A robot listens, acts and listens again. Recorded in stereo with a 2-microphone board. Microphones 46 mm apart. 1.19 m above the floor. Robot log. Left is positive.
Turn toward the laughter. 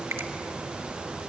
cmd idle
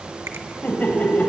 note: The laughter: about 35° left or 145° left.
cmd yaw +35
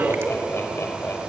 note: So it is at 110° left.
cmd yaw +110
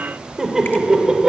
note: The laughter is now 15° right.
cmd yaw -15
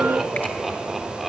end: Facing the laughter, 2 to 4 m away.